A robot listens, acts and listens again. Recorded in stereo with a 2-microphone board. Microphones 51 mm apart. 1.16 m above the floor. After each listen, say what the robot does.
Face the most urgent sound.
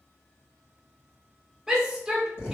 Turn 30° right.
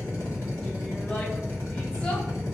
Keep listening.
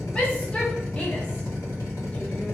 Turn 20° left.
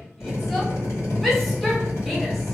Found it: a shout, straight ahead.